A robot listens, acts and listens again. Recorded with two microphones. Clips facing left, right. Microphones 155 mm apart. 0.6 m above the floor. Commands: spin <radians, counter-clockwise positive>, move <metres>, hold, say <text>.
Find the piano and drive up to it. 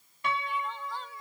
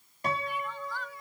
spin -0.70
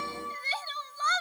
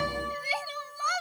spin -1.75
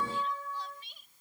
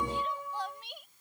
spin -0.26
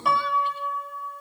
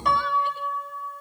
move 1.0
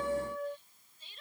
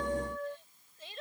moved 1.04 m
move 1.0
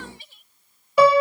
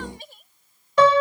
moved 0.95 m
spin 0.17
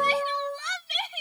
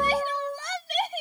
move 1.0
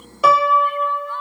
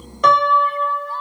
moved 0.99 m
move 1.0
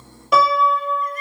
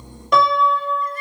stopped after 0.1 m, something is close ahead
say I am next to the piano.